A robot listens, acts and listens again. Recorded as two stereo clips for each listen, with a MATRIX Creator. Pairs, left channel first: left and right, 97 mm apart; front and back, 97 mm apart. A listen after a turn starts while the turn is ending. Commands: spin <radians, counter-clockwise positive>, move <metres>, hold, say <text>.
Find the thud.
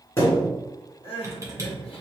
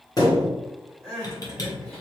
spin 0.52
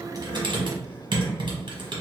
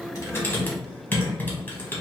say I heard a thud from this way, but can't make it out now.